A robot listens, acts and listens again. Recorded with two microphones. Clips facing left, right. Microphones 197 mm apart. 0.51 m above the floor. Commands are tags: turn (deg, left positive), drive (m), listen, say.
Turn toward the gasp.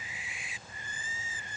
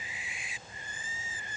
<listen/>
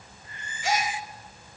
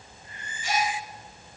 <turn deg="90"/>
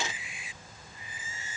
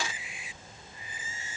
<say>Facing where the gasp came from. I can't hear it now.</say>